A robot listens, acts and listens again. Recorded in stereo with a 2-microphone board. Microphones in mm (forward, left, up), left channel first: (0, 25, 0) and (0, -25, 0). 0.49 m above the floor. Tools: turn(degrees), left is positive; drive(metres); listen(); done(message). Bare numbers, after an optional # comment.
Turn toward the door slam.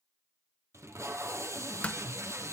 # The door slam: about 30° left or 150° left.
turn(30)
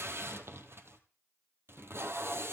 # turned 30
listen()
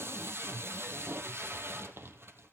done("I heard a door slam, but can't make it out now. It was about straight ahead or 120° left.")